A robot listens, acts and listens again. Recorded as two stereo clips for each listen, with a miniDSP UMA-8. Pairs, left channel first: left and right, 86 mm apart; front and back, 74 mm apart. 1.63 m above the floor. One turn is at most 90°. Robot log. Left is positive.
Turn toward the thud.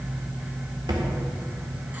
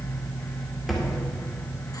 note: The thud: 95° right.
cmd yaw -90
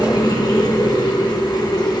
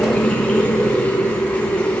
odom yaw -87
note: Nothing new. It was at 10° right.
cmd yaw -10
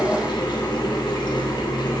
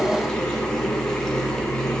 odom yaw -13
end: Facing where the thud came from. I can't hear it now.